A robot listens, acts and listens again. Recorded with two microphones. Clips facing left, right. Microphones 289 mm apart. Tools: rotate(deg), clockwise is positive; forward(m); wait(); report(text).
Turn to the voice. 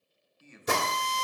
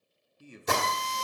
rotate(40)
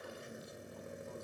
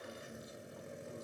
wait()
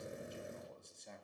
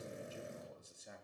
report("Found it: a man speaking, straight ahead.")